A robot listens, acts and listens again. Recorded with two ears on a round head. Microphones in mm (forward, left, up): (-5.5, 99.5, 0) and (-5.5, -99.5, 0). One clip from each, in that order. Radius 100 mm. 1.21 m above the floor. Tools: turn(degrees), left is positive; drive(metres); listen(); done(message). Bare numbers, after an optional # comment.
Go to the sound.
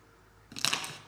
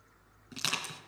turn(30)
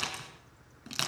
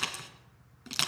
# So it is at 15° right.
turn(-15)
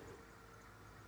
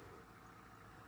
listen()
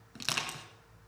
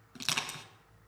drive(1.0)
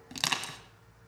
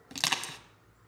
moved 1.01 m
# The crushing is now 10° right.
turn(-10)
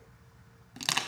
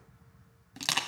drive(1.0)
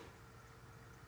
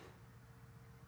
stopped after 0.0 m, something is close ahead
listen()
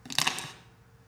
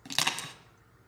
done("Arrived at the crushing, straight ahead.")